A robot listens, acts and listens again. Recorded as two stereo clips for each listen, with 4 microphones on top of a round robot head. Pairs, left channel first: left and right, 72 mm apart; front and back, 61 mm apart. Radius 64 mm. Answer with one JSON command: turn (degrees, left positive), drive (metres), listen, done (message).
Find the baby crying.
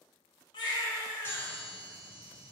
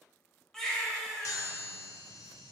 {"turn": 80}
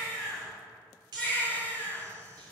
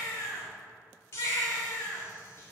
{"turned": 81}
{"done": "Found it: a baby crying, straight ahead, 1 to 2 m away."}